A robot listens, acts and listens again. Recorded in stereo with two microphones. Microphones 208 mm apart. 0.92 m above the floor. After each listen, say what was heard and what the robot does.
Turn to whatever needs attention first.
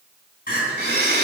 The crying: about 45° left or 135° left. Turn 45° left.
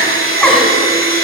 Found it: crying, straight ahead, 2 to 4 m away.